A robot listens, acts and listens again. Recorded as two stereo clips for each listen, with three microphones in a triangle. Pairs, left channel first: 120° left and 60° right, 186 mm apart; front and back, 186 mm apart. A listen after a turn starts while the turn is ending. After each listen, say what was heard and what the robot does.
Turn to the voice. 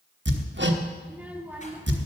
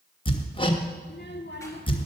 The child speaking: 25° left. Turn 25° left.
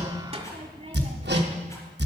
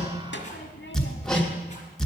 Found it: a child speaking, straight ahead, 1 to 2 m away.